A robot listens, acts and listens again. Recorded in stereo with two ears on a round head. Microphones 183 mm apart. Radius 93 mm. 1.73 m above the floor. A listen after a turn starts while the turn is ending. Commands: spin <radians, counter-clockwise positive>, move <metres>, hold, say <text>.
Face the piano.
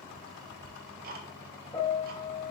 spin 0.44
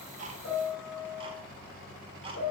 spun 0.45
spin 2.27
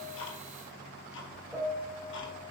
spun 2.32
say Found it: a piano, straight ahead.